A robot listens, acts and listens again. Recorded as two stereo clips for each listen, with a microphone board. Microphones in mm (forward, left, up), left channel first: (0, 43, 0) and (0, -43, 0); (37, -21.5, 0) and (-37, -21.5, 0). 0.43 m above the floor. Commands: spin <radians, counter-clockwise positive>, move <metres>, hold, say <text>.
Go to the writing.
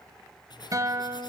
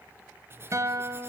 spin 2.18
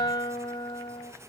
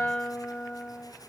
hold
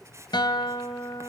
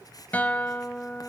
spin -0.61
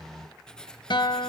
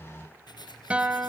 spin 0.17
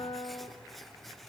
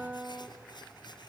move 1.0
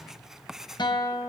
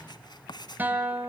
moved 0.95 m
move 1.0
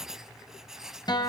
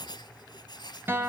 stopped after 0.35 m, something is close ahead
say I am next to the writing.